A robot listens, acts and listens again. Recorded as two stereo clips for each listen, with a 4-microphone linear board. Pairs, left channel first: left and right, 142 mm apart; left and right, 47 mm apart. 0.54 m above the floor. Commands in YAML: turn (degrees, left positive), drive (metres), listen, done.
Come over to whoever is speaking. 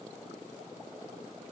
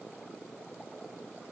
listen: true
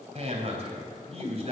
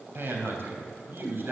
turn: -50
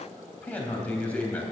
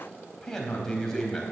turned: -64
turn: 10
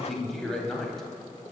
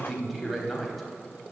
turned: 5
drive: 1.0
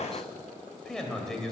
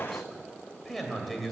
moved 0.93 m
drive: 1.0
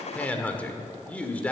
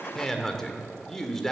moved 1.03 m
turn: 10
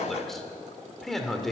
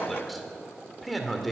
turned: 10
drive: 1.0
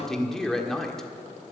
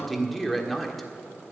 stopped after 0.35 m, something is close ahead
done: "I am next to the man speaking."